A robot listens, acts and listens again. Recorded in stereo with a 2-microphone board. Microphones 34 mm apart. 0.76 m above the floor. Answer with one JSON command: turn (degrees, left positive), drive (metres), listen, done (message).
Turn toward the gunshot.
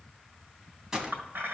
{"turn": -15}
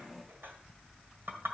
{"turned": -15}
{"listen": true}
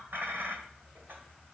{"done": "I heard a gunshot, but can't make it out now. It was about straight ahead or 150° right."}